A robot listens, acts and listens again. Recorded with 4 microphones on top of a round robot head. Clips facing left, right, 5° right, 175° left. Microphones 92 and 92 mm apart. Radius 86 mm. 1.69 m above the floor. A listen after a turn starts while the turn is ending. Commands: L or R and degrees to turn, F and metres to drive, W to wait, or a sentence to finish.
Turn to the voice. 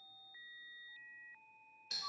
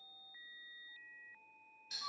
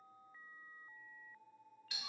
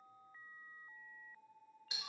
W
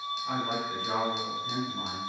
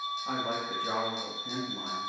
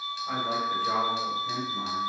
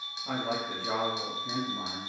R145
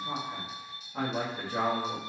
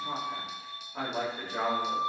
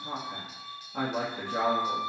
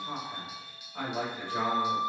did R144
Facing the man speaking, 1 to 2 m away.